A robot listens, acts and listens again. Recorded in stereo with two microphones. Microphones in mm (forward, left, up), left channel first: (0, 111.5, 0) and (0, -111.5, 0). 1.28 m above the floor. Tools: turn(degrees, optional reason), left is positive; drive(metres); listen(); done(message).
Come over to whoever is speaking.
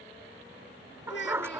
turn(degrees=60, reason="The child speaking: about 60° left or 120° left.")
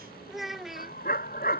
drive(metres=1.0)
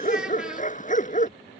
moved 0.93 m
listen()
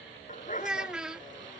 drive(metres=1.0)
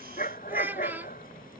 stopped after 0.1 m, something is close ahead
turn(degrees=-10, reason="The child speaking is now 10° right.")
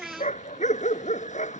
done("Arrived at the child speaking, straight ahead.")